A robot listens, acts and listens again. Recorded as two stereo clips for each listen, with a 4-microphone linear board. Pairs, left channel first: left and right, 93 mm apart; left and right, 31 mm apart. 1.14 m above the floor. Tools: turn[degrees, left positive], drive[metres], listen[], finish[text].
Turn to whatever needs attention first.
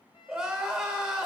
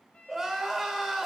Action: turn[-30]
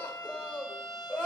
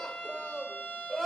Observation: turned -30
Thought: So it is at 25° left.
Action: turn[25]
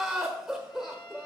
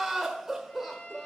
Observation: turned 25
Action: finish[Found it: crying, straight ahead.]